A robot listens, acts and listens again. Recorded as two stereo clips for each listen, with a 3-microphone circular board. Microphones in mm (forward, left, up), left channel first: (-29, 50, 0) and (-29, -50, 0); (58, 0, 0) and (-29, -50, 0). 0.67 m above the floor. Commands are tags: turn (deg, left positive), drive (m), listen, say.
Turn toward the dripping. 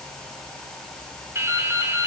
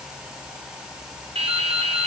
<turn deg="-155"/>
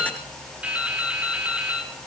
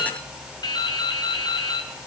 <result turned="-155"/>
<turn deg="-15"/>
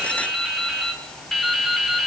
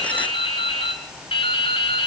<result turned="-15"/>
<say>Facing the dripping.</say>